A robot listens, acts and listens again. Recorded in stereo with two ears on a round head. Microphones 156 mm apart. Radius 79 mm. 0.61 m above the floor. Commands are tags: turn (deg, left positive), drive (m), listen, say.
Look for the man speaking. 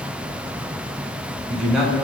<turn deg="30"/>
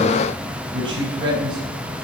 <turn deg="-30"/>
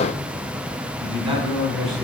<say>Found it: a man speaking, straight ahead, over 4 m away.</say>